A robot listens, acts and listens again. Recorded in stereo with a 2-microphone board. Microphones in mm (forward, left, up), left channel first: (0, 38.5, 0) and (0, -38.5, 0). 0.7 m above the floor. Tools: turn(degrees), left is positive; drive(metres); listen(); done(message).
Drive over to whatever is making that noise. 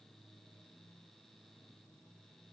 listen()
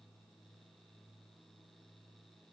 listen()
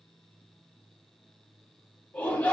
turn(degrees=20)
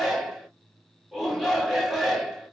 drive(metres=1.0)
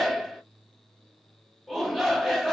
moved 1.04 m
drive(metres=1.0)
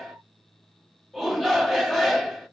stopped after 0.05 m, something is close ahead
done("Arrived at the shout, straight ahead.")